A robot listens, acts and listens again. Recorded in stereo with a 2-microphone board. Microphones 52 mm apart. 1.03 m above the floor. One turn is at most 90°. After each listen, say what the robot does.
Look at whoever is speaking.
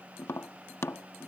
Keep listening.
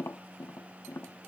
Keep listening.
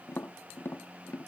I can't make out anyone speaking, only tapping.